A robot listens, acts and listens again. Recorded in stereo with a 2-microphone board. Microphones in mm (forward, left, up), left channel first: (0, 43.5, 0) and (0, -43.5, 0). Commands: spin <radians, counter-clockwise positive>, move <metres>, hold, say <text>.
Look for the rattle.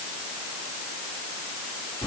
hold
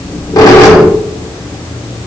hold
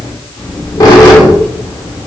say I can't make out a rattle, only a squeak.